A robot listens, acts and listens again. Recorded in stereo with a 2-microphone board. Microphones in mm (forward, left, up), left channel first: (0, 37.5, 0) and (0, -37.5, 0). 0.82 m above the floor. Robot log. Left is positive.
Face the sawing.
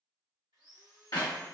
note: The sawing: about 70° right or 110° right.
cmd yaw -70
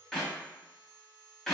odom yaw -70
note: So it is at 30° right.
cmd yaw -30
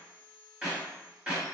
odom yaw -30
note: The sawing is now 10° right.
cmd yaw -10
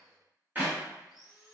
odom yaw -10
end: Facing the sawing.